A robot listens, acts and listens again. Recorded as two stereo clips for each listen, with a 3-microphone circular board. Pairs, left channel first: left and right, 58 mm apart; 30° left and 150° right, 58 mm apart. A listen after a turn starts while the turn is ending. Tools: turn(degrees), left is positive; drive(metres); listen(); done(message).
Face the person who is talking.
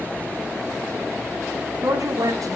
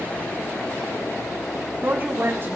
turn(degrees=-100)
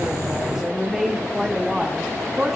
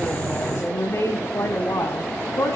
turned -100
done("Found it: a woman speaking, straight ahead, over 4 m away.")